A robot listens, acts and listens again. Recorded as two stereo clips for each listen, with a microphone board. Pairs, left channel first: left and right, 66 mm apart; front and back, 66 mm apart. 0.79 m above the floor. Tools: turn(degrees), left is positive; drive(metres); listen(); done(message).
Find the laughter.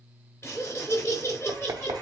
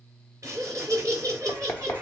turn(degrees=145)
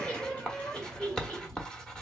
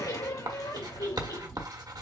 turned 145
turn(degrees=20)
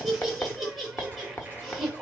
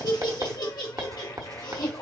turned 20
done("Found it: laughter, straight ahead, 2 to 4 m away.")